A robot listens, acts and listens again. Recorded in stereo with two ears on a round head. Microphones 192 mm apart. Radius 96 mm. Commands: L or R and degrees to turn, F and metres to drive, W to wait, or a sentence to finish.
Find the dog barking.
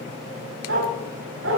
R70
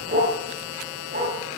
R35
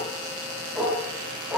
Found it: a dog barking, straight ahead, over 4 m away.